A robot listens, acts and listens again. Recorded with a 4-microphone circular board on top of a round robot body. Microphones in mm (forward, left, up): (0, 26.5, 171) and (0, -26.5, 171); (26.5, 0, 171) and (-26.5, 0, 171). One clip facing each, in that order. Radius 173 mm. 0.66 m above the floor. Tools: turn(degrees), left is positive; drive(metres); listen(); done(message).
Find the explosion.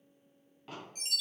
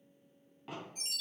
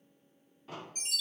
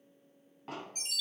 turn(degrees=-170)
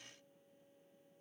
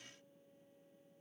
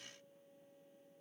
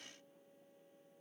done("I heard an explosion from this way, but can't make it out now.")